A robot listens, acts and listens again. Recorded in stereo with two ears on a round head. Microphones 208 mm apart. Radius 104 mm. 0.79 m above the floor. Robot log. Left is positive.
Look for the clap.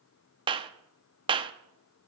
note: The clap: about 20° right or 160° right.
cmd yaw -20
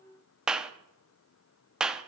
end: Found it: a clap, straight ahead, under 1 m away.